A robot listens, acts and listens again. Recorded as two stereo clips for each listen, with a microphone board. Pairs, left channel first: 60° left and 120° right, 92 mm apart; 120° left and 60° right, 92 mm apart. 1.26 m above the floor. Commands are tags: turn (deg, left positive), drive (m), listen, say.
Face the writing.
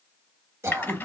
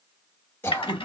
<listen/>
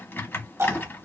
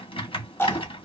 <listen/>
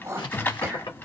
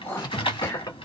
<turn deg="85"/>
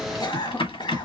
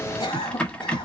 <listen/>
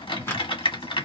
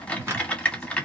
<say>Facing the writing, 1 to 2 m away.</say>